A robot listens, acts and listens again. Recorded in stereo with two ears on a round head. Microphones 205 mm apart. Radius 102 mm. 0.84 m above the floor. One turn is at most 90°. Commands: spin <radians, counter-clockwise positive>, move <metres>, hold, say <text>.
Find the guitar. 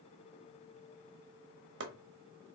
hold
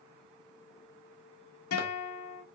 spin 1.22
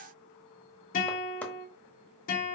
spin 0.70
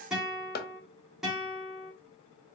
say Found it: a guitar, straight ahead.